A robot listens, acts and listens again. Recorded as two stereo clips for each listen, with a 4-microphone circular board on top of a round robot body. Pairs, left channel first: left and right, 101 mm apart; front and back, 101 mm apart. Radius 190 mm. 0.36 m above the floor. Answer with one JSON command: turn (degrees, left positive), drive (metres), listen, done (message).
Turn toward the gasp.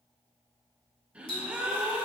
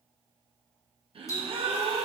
{"turn": -165}
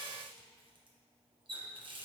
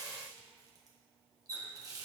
{"done": "Facing where the gasp came from. I can't hear it now."}